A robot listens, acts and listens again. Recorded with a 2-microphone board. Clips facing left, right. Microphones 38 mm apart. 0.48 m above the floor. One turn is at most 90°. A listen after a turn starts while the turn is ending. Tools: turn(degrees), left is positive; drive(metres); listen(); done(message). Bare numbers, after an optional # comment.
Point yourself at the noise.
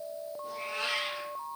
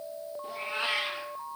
# The cat meowing: about 25° right or 155° right.
turn(-25)
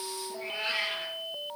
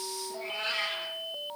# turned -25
# So it is at 15° left.
turn(15)
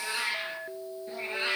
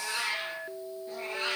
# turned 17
# The cat meowing is now 35° left.
turn(35)
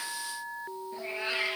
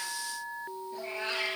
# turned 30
# The cat meowing is now 25° left.
turn(25)
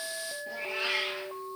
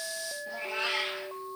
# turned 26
# The cat meowing is now 10° left.
turn(10)
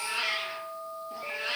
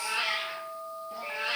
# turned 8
done("Facing the cat meowing, 1 to 2 m away.")